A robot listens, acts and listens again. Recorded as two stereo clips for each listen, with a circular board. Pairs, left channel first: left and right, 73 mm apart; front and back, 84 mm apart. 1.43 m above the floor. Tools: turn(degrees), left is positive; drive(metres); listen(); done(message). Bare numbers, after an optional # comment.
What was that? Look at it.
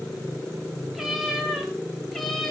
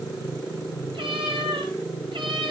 # The cat meowing: 175° left.
turn(175)
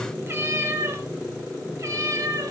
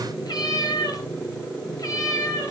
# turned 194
# The cat meowing is now 50° right.
turn(-50)
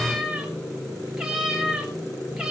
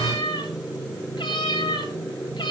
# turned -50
done("Facing the cat meowing, 2 to 4 m away.")